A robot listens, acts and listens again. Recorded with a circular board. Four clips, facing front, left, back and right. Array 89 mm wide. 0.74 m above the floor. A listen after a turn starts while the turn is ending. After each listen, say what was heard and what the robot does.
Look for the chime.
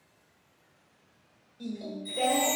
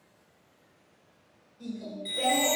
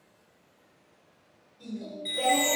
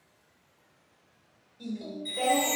The chime: 155° left. Turn 155° left.
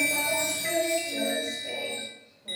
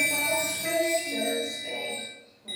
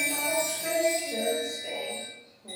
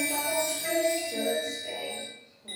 Found it: a chime, straight ahead.